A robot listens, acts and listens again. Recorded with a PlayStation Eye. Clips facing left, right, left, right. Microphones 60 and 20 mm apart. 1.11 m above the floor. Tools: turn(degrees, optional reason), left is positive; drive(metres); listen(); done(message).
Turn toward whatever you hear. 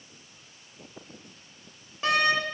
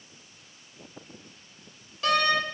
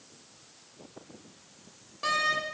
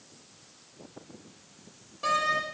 turn(degrees=25, reason="The door slam: about 25° left or 155° left.")
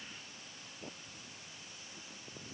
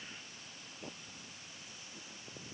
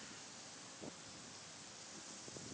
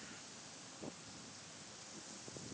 listen()
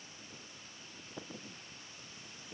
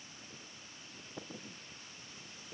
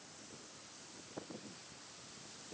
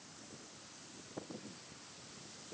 done("I heard a door slam, but can't make it out now. It was about straight ahead or 130° left.")